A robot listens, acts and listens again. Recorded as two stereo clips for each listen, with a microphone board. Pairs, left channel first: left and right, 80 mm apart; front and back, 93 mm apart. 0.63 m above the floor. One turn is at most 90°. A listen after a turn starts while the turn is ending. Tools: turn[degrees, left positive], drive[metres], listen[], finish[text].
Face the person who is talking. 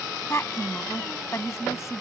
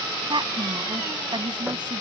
Thought: The woman speaking: 140° left.
Action: turn[90]
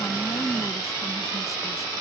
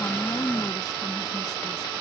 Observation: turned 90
Thought: The woman speaking is now 45° left.
Action: turn[45]
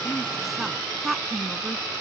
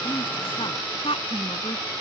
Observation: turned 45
Action: finish[Found it: a woman speaking, straight ahead.]